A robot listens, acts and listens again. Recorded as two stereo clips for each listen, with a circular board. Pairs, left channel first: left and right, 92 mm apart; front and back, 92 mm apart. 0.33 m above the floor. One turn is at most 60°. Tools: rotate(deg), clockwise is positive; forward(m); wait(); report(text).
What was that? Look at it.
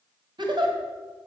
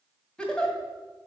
rotate(60)
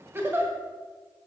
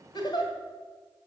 rotate(25)
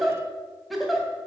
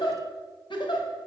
report("Facing the giggle, 1 to 2 m away.")